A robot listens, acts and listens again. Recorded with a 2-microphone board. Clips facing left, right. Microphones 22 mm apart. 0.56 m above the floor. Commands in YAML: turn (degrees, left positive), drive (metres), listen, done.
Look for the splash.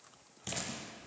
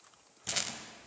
turn: 30
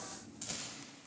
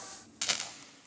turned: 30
listen: true
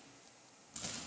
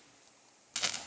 done: "I heard a splash, but can't make it out now. It was about 15° right or 135° left."